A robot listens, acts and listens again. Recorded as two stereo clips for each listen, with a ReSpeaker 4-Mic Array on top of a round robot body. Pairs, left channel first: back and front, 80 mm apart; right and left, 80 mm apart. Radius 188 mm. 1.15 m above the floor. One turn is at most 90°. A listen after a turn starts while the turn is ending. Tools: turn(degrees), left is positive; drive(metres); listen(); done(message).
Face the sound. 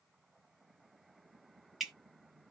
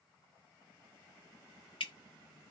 turn(degrees=-85)
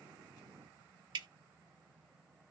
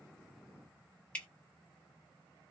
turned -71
turn(degrees=-15)
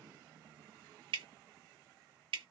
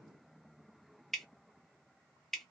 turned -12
done("Facing the dripping, 1 to 2 m away.")